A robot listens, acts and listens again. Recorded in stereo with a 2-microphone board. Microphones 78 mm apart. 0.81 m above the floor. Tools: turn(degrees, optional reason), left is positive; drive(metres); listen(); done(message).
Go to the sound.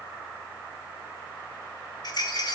turn(degrees=60, reason="The rattle: about 60° left or 120° left.")
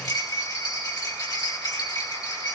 turn(degrees=55, reason="So it is at 55° left.")
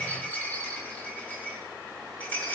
turn(degrees=20, reason="The rattle is now 20° left.")
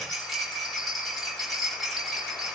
drive(metres=1.0)
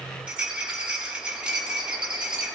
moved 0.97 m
turn(degrees=-15, reason="The rattle is now 15° right.")
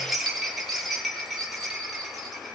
drive(metres=1.0)
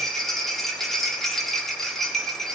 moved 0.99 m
drive(metres=1.0)
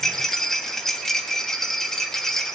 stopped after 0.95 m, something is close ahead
done("Arrived at the rattle, straight ahead.")